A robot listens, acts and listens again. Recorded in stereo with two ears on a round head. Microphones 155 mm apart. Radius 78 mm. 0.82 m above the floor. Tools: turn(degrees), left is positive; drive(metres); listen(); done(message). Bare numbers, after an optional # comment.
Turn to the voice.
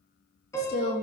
# The woman speaking: about 60° left or 120° left.
turn(60)
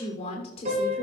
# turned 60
# So it is at 35° left.
turn(35)
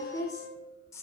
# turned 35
# The woman speaking is now 20° left.
turn(20)
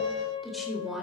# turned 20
done("Facing the woman speaking.")